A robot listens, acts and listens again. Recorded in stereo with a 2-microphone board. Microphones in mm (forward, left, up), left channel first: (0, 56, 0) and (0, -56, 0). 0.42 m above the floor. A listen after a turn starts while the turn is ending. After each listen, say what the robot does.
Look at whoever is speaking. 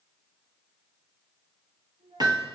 Turn 70° right.
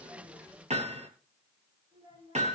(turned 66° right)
Turn 45° right.
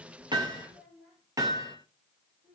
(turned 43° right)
Found it: a child speaking, straight ahead, over 4 m away.